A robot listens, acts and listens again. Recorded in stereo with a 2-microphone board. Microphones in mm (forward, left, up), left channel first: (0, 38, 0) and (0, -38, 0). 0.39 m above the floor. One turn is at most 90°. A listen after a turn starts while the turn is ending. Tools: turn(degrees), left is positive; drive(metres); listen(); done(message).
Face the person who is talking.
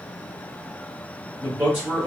turn(degrees=-25)
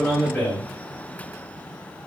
done("Facing the man speaking.")